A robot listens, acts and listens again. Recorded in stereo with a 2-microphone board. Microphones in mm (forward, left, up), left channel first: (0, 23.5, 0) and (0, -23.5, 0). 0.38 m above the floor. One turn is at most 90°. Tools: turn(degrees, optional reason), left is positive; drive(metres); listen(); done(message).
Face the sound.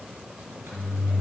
turn(degrees=-50, reason="The microwave: about 50° right or 130° right.")
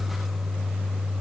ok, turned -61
done("Found it: a microwave, straight ahead.")